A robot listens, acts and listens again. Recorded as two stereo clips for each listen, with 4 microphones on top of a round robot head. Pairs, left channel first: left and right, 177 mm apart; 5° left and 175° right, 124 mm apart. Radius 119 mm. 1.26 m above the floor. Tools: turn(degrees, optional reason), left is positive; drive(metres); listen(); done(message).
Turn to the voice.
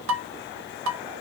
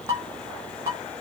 listen()
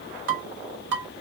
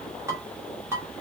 listen()
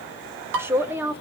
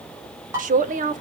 turn(degrees=-170, reason="The man speaking: 170° right.")
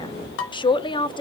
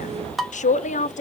turn(degrees=25, reason="The man speaking is now 25° left.")
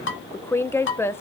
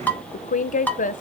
turn(degrees=15, reason="The man speaking is now 15° left.")
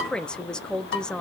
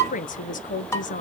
done("Found it: a man speaking, straight ahead.")